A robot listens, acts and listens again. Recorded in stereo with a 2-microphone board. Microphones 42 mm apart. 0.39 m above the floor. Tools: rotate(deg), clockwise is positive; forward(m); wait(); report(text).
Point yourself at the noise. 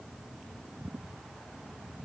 wait()
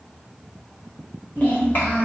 rotate(-40)
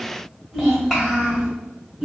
rotate(10)
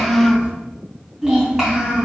report("Facing the child speaking.")